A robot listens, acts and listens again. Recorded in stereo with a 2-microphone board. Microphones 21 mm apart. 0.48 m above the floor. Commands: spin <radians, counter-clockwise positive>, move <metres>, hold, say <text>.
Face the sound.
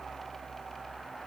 hold
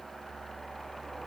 hold
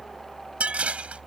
spin -1.22
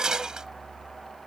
spin -0.52
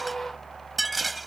say Found it: dishes clattering, straight ahead.